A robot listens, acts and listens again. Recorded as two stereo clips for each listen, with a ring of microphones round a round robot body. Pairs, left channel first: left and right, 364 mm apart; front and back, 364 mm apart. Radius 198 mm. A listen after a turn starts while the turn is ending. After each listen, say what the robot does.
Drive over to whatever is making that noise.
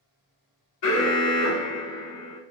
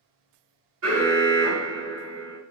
Turn 130° left.
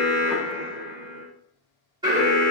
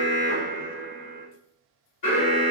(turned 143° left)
Turn 15° right.
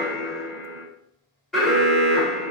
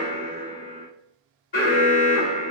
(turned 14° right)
Drive 1.0 m forward.
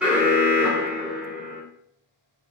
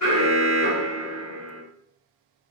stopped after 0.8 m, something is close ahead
I am next to the alarm.